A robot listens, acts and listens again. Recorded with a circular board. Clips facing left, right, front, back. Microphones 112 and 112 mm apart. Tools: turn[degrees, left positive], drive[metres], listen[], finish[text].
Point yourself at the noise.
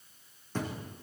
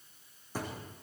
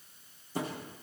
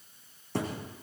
Thought: The thud: 170° right.
Action: turn[-170]
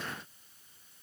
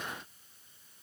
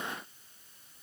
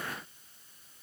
Action: finish[I heard a thud from this way, but can't make it out now.]